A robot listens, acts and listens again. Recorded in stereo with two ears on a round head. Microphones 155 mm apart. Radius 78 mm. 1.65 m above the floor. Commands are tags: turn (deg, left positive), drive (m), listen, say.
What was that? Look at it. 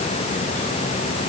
<listen/>
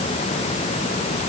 <listen/>
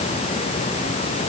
<say>I can't make out anything.</say>